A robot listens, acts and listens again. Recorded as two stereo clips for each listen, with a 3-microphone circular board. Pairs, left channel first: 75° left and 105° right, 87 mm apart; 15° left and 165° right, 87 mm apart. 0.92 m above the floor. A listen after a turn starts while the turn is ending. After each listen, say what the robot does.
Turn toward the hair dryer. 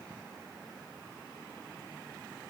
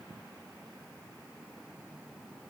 Keep listening.
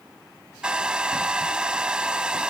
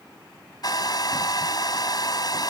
Turn 25° right.
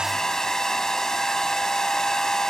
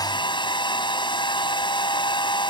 Turn 10° right.
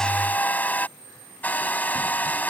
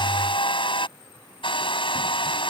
Facing the hair dryer.